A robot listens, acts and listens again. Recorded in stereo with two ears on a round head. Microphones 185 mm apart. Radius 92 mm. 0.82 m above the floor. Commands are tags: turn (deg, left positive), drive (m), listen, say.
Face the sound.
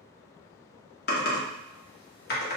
<turn deg="50"/>
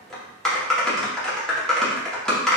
<say>Facing the typing on a keyboard.</say>